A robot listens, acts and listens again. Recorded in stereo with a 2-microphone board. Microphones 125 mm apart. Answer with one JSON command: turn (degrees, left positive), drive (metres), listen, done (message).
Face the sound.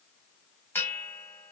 {"turn": 20}
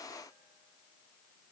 {"listen": true}
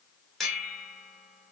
{"done": "Facing the bell, 1 to 2 m away."}